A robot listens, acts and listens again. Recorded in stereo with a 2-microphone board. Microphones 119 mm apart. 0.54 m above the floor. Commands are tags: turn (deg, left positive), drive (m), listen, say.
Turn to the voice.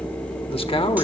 <turn deg="50"/>
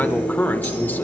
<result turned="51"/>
<turn deg="20"/>
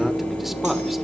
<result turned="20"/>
<listen/>
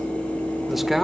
<say>Found it: a man speaking, straight ahead.</say>